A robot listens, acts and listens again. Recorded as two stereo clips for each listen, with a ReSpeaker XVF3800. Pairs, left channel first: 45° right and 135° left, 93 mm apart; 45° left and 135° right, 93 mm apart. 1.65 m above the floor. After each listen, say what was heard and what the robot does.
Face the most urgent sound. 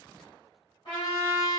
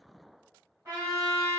Keep listening.
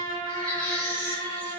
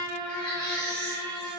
The baby crying: 30° right. Turn 30° right.
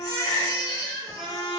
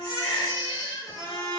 The baby crying is now 10° left. Turn 10° left.
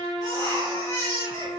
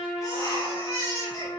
Found it: a baby crying, straight ahead, 1 to 2 m away.